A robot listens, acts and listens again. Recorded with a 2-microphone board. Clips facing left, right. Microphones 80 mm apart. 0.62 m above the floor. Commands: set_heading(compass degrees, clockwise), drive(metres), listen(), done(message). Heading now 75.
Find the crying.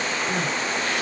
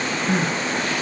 set_heading(130)
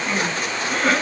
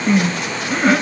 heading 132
set_heading(142)
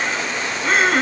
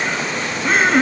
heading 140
done("Facing the crying, under 1 m away.")